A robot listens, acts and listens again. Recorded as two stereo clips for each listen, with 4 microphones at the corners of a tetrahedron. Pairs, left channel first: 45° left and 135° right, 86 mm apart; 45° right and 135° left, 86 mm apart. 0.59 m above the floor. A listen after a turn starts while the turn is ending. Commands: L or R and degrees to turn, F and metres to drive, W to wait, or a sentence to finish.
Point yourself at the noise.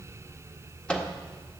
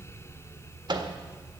L125
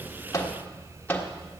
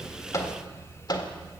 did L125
R20
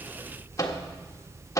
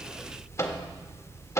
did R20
Facing the microwave.